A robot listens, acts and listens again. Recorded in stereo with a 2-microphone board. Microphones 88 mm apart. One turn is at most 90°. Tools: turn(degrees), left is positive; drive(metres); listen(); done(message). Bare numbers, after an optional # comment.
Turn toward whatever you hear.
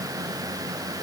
listen()
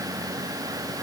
listen()
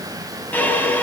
# The violin: about 20° left or 160° left.
turn(20)
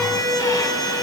# So it is at 135° left.
turn(90)
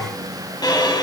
# The violin is now 50° left.
turn(50)
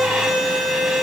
done("Found it: a violin, straight ahead, over 4 m away.")